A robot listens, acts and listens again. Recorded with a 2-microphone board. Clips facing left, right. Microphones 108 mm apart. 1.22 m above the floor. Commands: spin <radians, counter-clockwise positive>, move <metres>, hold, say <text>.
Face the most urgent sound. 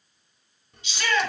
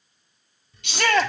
spin -1.13
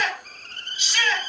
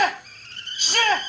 spin -0.87
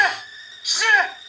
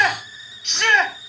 say Facing the shout, 2 to 4 m away.